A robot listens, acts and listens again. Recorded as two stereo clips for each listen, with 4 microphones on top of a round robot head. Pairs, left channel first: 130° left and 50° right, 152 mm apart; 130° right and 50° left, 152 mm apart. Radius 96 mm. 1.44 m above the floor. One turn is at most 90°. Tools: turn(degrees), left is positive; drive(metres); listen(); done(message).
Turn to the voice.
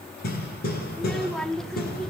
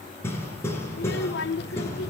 turn(degrees=-90)
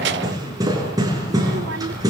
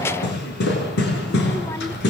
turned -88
turn(degrees=-55)
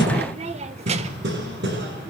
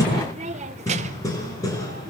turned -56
done("Facing the child speaking, under 1 m away.")